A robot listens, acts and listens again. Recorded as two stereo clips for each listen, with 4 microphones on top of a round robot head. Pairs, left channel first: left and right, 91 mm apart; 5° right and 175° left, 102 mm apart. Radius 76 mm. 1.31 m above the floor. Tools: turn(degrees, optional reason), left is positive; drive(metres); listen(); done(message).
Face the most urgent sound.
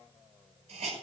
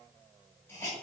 listen()
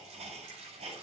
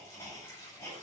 listen()
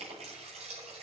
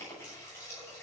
done("I can't make out anything urgent to turn to.")